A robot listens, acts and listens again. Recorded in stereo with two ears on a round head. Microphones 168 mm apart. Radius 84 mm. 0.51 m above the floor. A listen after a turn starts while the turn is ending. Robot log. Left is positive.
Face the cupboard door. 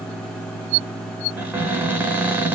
cmd yaw -30
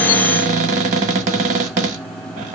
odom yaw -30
note: So it is at 140° right.
cmd yaw -140
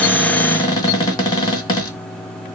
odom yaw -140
note: The cupboard door is now 25° left.
cmd yaw +25
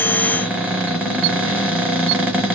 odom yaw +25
note: The cupboard door is now 10° right.
cmd yaw -10
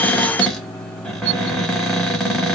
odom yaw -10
end: Found it: a cupboard door, straight ahead, under 1 m away.